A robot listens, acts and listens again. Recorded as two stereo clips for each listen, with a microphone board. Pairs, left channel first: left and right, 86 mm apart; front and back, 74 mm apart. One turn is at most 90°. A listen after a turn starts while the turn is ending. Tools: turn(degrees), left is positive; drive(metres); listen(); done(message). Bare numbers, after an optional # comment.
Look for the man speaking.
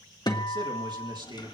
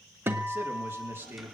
# The man speaking: 120° right.
turn(-90)
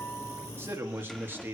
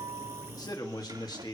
# The man speaking is now 25° right.
turn(-25)
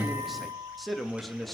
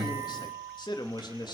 done("Facing the man speaking.")